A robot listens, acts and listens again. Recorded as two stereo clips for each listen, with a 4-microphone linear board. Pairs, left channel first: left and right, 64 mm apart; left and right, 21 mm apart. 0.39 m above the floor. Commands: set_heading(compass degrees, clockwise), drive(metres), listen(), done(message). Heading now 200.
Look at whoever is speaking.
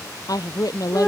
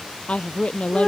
set_heading(140)
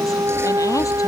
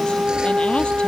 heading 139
listen()
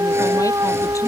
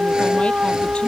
listen()
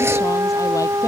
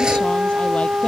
done("I heard a woman speaking, but can't make it out now. It was about straight ahead or 55° left.")